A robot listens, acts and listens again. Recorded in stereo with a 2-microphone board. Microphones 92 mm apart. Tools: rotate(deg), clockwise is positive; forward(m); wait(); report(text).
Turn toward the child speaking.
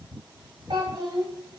rotate(65)
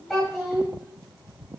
report("Facing the child speaking, 1 to 2 m away.")